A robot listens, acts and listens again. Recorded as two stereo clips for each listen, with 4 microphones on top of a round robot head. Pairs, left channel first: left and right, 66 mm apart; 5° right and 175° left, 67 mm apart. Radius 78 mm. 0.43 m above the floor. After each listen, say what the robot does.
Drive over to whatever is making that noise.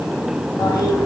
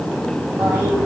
Turn 120° left.
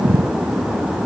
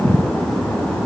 Keep listening.
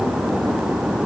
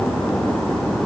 Keep listening.
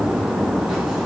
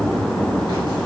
I heard a toilet flushing from this way, but can't make it out now. I did not reach it.